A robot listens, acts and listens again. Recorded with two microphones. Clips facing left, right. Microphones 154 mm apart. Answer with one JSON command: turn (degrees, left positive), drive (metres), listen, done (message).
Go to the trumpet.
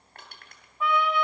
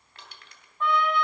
{"turn": 30}
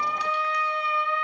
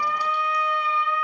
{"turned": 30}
{"turn": 145}
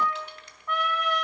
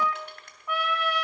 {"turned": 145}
{"drive": 1.0}
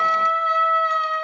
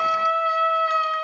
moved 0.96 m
{"turn": -10}
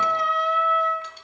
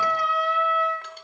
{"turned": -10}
{"drive": 1.0}
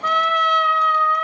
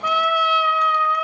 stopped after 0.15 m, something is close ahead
{"turn": -10}
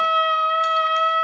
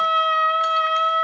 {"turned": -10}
{"done": "Arrived at the trumpet, straight ahead."}